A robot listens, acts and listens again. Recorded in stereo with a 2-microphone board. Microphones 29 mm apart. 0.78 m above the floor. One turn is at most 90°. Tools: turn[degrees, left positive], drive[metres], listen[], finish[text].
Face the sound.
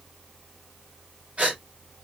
Thought: The gasp: about 50° right or 130° right.
Action: turn[-50]
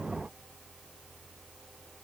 Action: listen[]
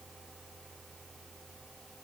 Action: finish[I heard a gasp, but can't make it out now. It was about straight ahead or 80° right.]